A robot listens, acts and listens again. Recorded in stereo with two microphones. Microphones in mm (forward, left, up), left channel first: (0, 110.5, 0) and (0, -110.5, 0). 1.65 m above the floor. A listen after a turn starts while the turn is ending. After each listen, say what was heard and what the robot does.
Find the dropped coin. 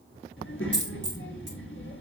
The dropped coin: about 55° right or 125° right. Turn 55° right.
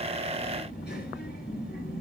Keep listening.
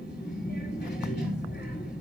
I heard a dropped coin, but can't make it out now. It was about straight ahead or 70° right.